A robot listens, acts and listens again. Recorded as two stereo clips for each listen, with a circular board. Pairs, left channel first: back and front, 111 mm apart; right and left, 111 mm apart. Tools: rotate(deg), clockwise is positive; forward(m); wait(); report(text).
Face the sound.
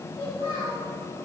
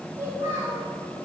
rotate(-160)
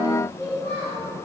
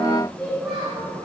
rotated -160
report("Facing the child speaking.")